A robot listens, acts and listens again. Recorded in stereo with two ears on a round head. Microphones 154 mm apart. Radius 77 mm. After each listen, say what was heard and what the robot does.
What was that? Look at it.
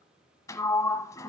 The sliding door: about 20° left or 160° left. Turn 20° left.
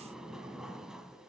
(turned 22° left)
Found it: a sliding door, straight ahead.